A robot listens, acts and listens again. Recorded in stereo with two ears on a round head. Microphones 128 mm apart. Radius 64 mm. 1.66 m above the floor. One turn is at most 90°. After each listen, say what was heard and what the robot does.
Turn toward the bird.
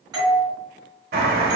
Turn 90° right.
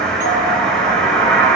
Found it: a bird, straight ahead.